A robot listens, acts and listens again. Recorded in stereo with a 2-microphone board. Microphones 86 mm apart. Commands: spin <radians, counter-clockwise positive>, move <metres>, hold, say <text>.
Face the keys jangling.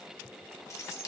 spin 0.61
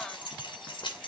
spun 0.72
spin 1.92
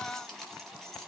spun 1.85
say Facing the keys jangling, 2 to 4 m away.